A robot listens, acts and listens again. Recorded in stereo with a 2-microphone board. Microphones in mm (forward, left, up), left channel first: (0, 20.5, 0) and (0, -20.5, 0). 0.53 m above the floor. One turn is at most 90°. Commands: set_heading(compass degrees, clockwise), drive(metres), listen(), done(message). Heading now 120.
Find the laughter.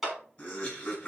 set_heading(90)
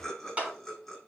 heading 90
done("Facing the laughter, over 4 m away.")